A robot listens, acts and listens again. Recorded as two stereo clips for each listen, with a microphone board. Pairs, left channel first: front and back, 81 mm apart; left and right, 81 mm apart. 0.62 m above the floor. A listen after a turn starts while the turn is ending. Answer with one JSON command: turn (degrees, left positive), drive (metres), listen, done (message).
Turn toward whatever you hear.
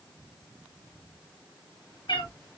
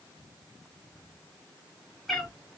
{"done": "Found it: a cat meowing, straight ahead."}